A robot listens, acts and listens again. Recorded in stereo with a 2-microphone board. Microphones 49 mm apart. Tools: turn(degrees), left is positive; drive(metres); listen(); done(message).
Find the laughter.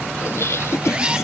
turn(degrees=70)
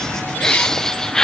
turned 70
turn(degrees=15)
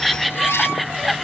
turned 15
done("Facing the laughter.")